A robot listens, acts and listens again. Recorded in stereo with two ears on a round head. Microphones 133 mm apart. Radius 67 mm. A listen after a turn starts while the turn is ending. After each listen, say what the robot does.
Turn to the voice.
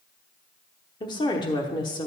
Turn 30° left.
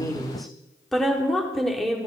Facing the woman speaking, 1 to 2 m away.